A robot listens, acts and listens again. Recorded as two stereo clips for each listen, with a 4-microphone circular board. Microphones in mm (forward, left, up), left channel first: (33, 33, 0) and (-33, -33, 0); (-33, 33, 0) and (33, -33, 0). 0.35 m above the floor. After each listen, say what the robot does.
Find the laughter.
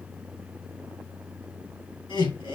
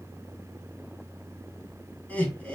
Turn 60° left.
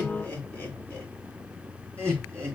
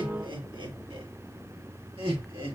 Turn 30° right.
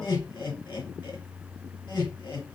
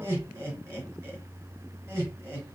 Turn 15° left.
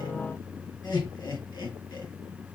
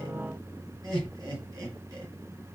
Facing the laughter.